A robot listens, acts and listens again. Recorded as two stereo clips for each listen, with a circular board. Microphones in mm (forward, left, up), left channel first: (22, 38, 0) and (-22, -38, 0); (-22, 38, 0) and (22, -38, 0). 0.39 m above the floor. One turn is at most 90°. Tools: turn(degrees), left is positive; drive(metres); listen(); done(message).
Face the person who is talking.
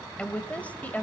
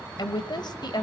turn(degrees=90)
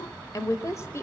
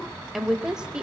turn(degrees=15)
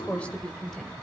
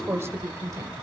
turn(degrees=-20)
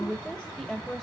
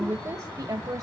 turn(degrees=-25)
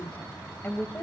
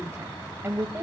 done("Found it: a woman speaking, straight ahead.")